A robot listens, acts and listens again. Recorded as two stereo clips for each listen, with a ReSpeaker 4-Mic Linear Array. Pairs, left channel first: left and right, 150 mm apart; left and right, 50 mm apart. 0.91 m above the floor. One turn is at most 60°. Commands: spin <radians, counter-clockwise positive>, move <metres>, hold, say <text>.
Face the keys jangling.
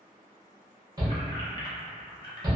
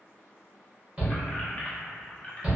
spin 0.52
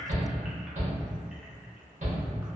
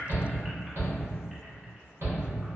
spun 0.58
hold
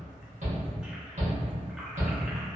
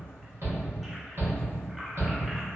hold
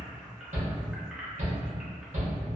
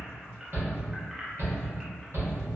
say I heard keys jangling, but can't make it out now. It was about 5° right or 120° left.